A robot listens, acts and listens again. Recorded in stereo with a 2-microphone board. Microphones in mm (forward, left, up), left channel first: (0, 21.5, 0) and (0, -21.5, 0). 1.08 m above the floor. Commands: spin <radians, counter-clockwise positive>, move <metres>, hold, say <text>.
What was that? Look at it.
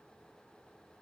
hold
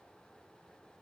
hold
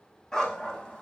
spin 0.35
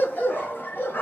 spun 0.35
spin 2.18
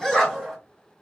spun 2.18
say Found it: a dog barking, straight ahead, 2 to 4 m away.